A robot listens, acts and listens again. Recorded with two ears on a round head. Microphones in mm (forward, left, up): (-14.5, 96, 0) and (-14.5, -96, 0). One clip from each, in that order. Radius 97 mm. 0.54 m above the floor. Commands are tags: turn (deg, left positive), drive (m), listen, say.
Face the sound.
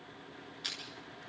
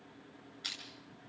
<turn deg="30"/>
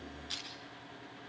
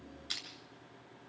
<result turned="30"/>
<turn deg="-25"/>
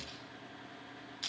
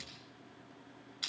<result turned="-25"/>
<turn deg="-10"/>
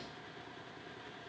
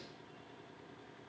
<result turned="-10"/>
<listen/>
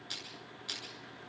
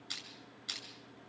<say>Facing the crushing, over 4 m away.</say>